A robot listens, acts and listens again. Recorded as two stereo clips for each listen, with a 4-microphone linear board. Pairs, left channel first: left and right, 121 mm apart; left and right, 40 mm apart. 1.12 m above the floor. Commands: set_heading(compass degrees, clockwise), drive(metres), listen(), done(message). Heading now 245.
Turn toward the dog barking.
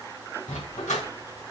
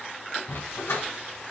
set_heading(175)
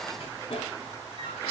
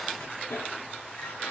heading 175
set_heading(130)
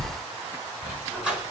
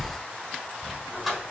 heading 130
done("Facing the dog barking.")